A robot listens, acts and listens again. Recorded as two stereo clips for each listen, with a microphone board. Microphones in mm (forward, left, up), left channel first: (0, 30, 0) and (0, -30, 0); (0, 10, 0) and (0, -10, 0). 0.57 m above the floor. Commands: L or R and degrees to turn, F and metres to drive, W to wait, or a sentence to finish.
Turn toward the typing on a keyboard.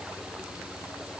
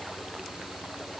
W
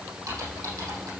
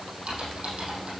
R90
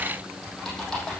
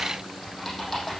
L10
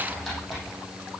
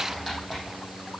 Facing the typing on a keyboard.